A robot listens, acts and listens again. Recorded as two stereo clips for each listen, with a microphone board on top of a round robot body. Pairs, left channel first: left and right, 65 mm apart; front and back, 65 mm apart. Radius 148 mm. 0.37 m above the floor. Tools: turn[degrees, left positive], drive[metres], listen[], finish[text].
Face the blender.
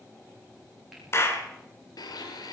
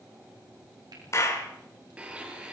Thought: The blender: 105° left.
Action: turn[105]
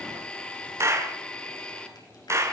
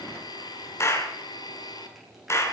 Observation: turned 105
Thought: The blender is now 15° left.
Action: turn[15]
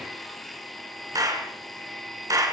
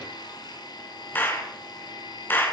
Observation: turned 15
Action: finish[Facing the blender.]